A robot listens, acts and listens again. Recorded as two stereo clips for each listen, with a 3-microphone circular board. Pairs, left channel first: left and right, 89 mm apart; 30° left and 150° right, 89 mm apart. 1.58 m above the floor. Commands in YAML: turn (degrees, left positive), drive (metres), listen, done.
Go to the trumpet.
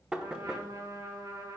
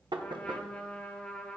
turn: -45
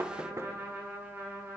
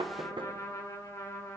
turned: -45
turn: -20
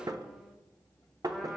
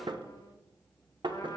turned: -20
listen: true
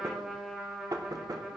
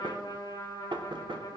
drive: 1.0
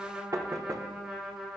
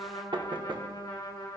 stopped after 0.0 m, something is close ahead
turn: -10
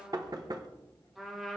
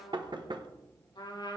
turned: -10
done: "Something is in my way. I am facing the trumpet but have not reached it."